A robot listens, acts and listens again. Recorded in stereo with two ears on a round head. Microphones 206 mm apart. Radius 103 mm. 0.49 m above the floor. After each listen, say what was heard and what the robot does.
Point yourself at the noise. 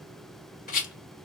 The rattle: about 35° left or 145° left. Turn 35° left.
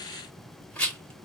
Facing the rattle, 1 to 2 m away.